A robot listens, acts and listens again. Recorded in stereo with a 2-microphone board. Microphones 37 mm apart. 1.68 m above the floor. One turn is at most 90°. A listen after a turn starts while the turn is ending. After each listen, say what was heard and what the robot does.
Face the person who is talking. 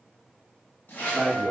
The man speaking: about 55° right or 125° right. Turn 55° right.
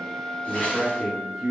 Facing the man speaking.